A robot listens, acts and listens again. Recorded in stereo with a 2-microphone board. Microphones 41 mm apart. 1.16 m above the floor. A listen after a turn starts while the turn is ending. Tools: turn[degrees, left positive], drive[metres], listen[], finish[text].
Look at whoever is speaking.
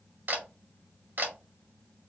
Action: listen[]
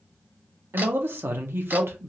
Thought: The man speaking: about 70° right or 110° right.
Action: turn[-70]
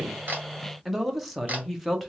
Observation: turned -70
Action: finish[Found it: a man speaking, straight ahead, under 1 m away.]